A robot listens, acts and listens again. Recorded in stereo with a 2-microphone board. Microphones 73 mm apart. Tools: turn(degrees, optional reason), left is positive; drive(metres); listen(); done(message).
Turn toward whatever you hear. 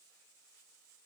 listen()
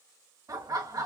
turn(degrees=-55, reason="The laughter: about 55° right or 125° right.")
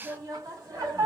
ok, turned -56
turn(degrees=-50, reason="So it is at 50° right.")
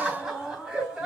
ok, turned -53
turn(degrees=-10, reason="The laughter is now 10° right.")
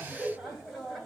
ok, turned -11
done("Facing the laughter, 2 to 4 m away.")